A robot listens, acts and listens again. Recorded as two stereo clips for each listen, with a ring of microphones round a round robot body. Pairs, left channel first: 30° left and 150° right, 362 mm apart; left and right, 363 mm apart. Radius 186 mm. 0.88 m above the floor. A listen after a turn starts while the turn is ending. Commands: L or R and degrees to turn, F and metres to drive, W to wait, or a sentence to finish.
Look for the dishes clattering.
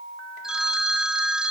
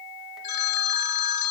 W
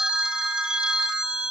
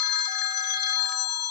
W
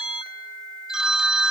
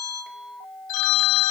I can't make out dishes clattering to turn to.